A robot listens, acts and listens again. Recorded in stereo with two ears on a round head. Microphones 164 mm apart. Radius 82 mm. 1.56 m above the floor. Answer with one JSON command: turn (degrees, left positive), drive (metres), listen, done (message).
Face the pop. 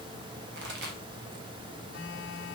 {"turn": -65}
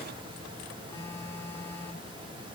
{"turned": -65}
{"listen": true}
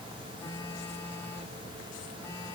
{"done": "I heard a pop, but can't make it out now. It was about straight ahead or 50° right."}